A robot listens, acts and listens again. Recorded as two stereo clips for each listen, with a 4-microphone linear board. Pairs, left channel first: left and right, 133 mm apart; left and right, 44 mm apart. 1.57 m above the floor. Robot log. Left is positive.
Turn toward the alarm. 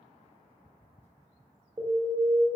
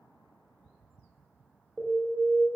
note: The alarm: about 40° right or 140° right.
cmd yaw -40
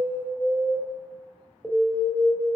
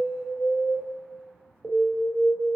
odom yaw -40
end: Found it: an alarm, straight ahead, under 1 m away.